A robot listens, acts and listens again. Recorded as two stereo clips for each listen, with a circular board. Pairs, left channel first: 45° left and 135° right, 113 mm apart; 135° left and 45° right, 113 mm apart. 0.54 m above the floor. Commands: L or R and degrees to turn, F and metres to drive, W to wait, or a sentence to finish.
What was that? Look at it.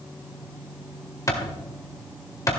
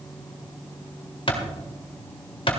L100
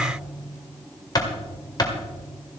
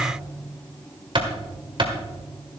Found it: a clap, straight ahead, 1 to 2 m away.